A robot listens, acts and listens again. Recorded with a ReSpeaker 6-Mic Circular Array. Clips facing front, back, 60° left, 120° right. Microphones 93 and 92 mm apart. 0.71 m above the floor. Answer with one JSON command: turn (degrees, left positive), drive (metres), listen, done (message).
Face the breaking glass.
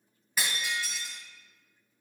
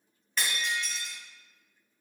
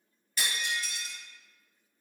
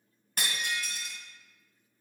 {"turn": -85}
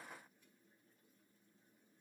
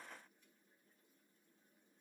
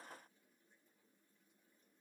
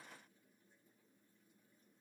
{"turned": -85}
{"done": "Facing where the breaking glass came from. I can't hear it now."}